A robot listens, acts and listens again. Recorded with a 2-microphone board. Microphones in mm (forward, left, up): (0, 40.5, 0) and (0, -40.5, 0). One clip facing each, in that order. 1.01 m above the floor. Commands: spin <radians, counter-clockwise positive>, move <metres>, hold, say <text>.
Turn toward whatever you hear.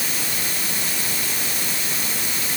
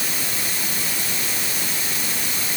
hold
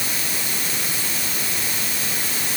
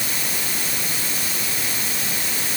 hold
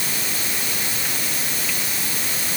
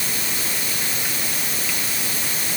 say I can't make out anything.